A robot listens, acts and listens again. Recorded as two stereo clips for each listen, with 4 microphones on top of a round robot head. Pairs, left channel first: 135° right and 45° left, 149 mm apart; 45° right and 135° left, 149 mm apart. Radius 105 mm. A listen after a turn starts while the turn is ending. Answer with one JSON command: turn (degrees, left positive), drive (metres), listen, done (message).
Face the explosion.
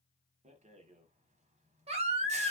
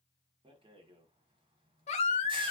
{"listen": true}
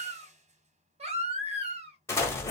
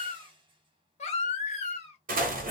{"turn": 155}
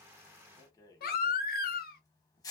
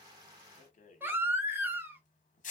{"done": "Facing where the explosion came from. I can't hear it now."}